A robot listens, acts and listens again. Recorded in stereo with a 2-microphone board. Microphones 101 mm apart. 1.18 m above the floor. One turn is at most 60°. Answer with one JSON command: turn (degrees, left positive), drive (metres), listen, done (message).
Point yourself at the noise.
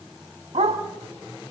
{"turn": -60}
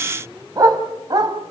{"turn": -40}
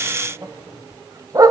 {"turn": -35}
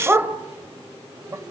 {"turn": -20}
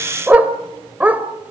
{"turn": -15}
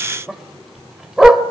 {"done": "Found it: a dog barking, straight ahead."}